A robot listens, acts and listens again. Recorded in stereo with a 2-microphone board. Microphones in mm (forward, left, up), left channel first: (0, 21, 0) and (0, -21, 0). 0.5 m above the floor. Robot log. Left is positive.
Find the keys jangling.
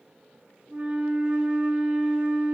cmd idle
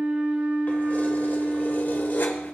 note: The keys jangling: about 60° left or 120° left.
cmd yaw +60
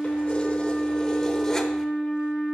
cmd idle
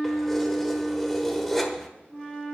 end: Found it: keys jangling, straight ahead.